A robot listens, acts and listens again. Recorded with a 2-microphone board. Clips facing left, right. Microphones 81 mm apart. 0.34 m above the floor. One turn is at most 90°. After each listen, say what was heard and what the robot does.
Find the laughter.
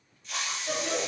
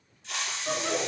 The laughter: about 60° right or 120° right. Turn 60° right.
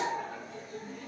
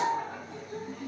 So it is at 60° right. Turn 60° right.
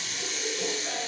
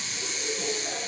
Found it: laughter, straight ahead.